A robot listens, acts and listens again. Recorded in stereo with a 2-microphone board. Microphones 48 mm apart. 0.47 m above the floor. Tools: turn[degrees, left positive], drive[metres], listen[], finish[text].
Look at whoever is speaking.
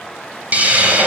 Action: listen[]
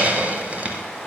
Action: listen[]
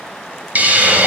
Action: finish[I can't make out anyone speaking, only a hiss.]